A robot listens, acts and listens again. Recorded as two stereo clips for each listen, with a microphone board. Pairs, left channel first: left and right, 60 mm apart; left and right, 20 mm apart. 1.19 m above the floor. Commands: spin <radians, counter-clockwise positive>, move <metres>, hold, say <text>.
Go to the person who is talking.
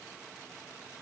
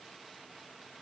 hold
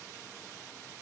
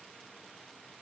hold
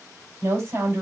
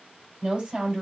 spin -1.13
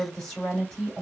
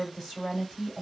move 1.0
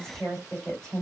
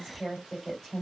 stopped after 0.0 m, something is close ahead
spin 0.17
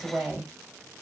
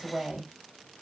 say Blocked. The woman speaking is further on, straight ahead.